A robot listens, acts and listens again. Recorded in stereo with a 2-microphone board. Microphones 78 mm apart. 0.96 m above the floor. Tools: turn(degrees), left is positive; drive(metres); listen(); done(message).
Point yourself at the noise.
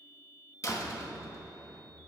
turn(degrees=40)
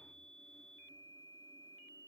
listen()
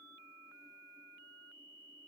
done("I heard a door slam, but can't make it out now. It was about straight ahead or 100° left.")